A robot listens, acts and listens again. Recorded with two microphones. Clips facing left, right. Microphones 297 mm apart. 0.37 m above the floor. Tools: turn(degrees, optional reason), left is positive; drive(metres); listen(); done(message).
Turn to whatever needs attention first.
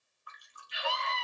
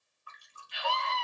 turn(degrees=-55, reason="The scream: about 55° right or 125° right.")
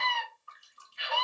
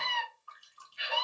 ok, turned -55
done("Found it: a scream, straight ahead.")